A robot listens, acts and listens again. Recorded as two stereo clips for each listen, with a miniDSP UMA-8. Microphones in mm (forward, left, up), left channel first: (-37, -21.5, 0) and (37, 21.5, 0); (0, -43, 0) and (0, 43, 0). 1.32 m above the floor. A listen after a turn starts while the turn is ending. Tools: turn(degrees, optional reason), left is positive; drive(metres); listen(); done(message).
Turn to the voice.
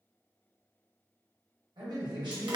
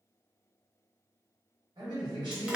turn(degrees=60, reason="The man speaking: 60° left.")
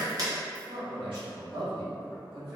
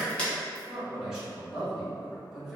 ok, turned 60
done("Facing the man speaking, 1 to 2 m away.")